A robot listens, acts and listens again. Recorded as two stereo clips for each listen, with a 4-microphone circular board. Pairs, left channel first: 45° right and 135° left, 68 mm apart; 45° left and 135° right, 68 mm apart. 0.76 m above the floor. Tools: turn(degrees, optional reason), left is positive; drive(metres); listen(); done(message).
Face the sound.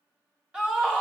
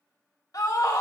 turn(degrees=60, reason="The scream: 60° left.")
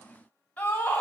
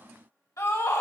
turn(degrees=20, reason="The scream is now 20° left.")
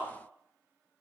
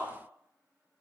listen()
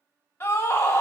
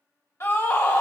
turn(degrees=10, reason="The scream is now 10° left.")
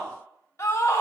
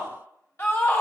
done("Facing the scream, 2 to 4 m away.")